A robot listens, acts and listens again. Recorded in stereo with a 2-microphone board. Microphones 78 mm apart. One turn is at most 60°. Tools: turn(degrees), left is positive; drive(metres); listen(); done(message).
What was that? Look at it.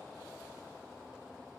listen()
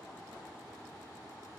listen()
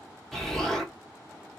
turn(degrees=30)
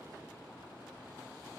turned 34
listen()
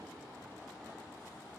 done("I heard an explosion, but can't make it out now. It was about 30° right or 140° left.")